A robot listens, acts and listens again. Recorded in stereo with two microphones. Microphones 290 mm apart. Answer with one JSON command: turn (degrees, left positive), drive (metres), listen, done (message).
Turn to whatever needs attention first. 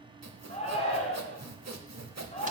{"turn": 20}
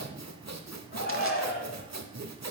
{"turn": 135}
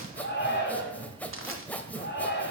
{"turn": 45}
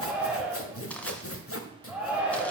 {"done": "Found it: a shout, straight ahead, 2 to 4 m away."}